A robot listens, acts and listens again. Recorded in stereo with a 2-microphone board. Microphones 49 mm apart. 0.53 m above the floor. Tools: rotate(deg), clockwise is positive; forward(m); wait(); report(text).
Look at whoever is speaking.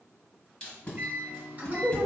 rotate(55)
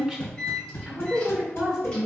rotate(15)
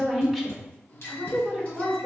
report("Facing the woman speaking, 1 to 2 m away.")